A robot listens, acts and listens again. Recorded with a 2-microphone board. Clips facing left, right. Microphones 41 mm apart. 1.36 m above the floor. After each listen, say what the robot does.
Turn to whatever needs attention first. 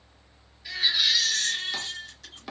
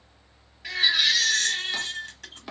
Turn 60° right.
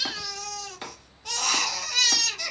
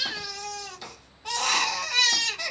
Turn 20° right.
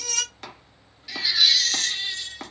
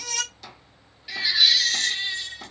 Turn 10° right.
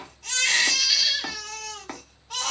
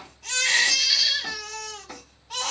Found it: a baby crying, straight ahead, 1 to 2 m away.